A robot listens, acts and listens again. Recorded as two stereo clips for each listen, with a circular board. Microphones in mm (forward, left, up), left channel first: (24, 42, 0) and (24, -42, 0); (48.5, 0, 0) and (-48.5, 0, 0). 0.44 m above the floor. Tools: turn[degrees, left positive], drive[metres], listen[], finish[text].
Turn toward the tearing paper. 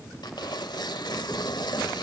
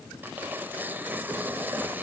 Thought: The tearing paper: 110° left.
Action: turn[110]
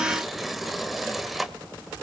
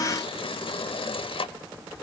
Action: finish[Found it: tearing paper, straight ahead.]